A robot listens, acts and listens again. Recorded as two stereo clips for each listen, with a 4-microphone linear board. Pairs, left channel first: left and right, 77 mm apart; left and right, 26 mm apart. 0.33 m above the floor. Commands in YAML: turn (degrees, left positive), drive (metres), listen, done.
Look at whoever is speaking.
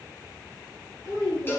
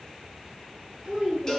turn: -45
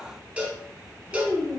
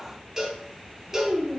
turn: -85
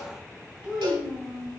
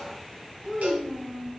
turn: -10
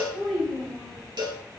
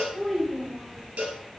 done: "Facing the child speaking."